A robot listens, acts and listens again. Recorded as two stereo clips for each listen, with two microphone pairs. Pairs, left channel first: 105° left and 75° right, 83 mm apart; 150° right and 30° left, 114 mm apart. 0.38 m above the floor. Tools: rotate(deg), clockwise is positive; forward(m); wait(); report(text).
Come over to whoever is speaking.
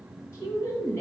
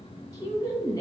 rotate(-155)
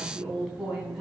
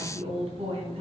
rotate(-10)
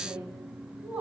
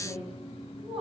forward(1.0)
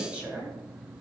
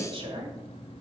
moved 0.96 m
forward(1.0)
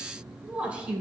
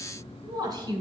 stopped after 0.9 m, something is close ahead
report("Arrived at the woman speaking, straight ahead.")